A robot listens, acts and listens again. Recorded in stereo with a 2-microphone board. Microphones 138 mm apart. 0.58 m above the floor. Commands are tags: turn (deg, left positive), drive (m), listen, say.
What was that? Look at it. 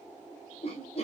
<turn deg="50"/>
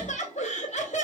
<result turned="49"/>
<turn deg="70"/>
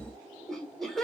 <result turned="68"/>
<say>Facing the laughter, 1 to 2 m away.</say>